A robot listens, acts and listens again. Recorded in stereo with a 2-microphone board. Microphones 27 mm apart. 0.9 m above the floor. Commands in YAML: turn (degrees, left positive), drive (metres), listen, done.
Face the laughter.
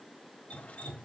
listen: true
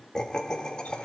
turn: 30
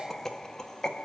turn: 25
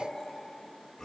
turn: 15
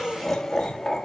turn: 10
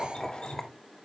done: "Found it: laughter, straight ahead."